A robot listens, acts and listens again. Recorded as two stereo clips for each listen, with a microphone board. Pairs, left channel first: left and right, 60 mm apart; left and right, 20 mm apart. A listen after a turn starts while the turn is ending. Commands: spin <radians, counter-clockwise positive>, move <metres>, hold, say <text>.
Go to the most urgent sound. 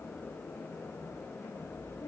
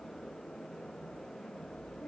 hold
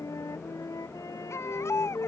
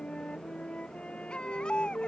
spin 0.96
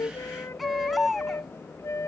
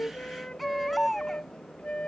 move 1.0
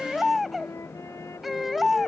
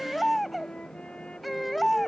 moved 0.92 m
move 1.0
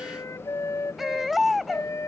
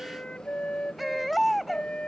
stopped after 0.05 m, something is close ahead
say Arrived at the baby crying, straight ahead.